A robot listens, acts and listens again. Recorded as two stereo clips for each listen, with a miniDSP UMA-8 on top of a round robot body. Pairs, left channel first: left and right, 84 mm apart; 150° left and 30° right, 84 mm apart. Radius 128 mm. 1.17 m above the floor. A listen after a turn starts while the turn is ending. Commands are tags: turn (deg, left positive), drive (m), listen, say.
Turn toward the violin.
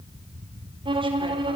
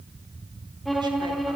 <turn deg="-120"/>
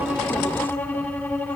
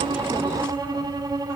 <turn deg="15"/>
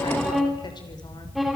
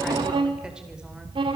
<say>Found it: a violin, straight ahead.</say>